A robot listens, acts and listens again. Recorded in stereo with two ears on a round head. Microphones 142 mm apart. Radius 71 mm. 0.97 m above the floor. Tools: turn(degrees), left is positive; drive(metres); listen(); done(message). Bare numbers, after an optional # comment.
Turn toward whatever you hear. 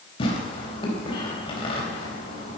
# The tearing paper: about 30° left or 150° left.
turn(30)
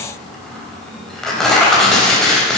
done("Facing the tearing paper.")